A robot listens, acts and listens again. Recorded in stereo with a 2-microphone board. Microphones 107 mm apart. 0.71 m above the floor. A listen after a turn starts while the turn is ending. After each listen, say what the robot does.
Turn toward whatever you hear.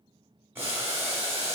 Turn 20° right.
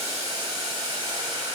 Turn 140° right.
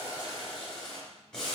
Facing the boiling, 1 to 2 m away.